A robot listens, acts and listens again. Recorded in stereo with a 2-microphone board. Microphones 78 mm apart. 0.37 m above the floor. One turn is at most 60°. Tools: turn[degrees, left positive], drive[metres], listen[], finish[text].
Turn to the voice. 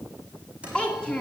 Action: turn[30]
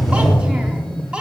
Thought: So it is at 15° right.
Action: turn[-15]
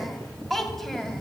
Action: finish[Found it: a child speaking, straight ahead.]